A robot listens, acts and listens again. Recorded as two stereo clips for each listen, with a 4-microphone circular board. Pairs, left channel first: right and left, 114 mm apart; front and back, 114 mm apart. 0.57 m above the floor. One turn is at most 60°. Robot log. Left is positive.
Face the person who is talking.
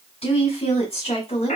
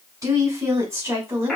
note: The woman speaking: 110° right.
cmd yaw -60
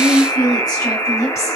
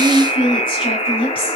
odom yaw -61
note: The woman speaking is now 30° right.
cmd yaw -30
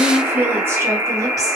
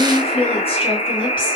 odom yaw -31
note: The woman speaking is now 20° left.
cmd yaw +20
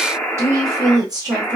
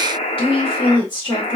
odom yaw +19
note: The woman speaking is now 45° left.
cmd yaw +45
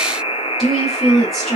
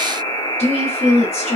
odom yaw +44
end: Facing the woman speaking, 1 to 2 m away.